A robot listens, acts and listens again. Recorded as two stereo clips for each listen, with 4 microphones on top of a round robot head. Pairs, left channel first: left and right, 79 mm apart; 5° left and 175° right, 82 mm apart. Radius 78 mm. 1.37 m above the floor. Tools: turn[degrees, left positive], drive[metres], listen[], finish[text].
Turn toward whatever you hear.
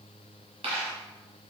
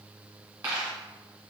Thought: The dropped coin: 110° right.
Action: turn[-110]
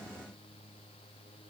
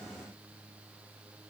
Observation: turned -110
Action: finish[I heard a dropped coin from this way, but can't make it out now.]